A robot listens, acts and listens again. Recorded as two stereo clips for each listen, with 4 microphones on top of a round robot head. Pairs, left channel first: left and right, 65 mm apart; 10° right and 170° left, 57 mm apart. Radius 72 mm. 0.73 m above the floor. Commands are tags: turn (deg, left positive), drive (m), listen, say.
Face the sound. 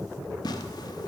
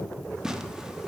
<turn deg="90"/>
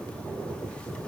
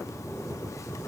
<listen/>
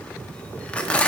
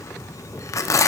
<turn deg="15"/>
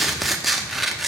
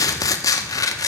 <say>Facing the tearing paper, under 1 m away.</say>